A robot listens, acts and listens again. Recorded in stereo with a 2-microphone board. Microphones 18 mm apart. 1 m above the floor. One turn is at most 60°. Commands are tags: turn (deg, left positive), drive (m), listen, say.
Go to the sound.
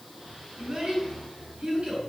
<turn deg="-60"/>
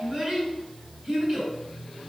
<turn deg="-35"/>
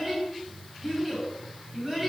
<turn deg="-15"/>
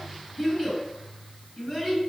<drive m="1.0"/>
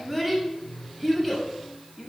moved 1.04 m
<drive m="1.0"/>
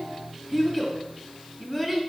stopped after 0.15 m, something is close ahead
<say>Arrived at the child speaking, straight ahead.</say>